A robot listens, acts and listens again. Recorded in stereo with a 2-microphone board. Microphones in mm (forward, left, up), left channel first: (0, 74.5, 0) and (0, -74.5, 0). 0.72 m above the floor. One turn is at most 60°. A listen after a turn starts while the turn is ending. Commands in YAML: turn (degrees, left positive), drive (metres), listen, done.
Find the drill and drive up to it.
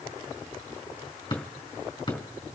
listen: true
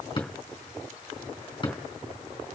listen: true
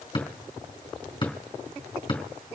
done: "I can't make out a drill, only a drawer."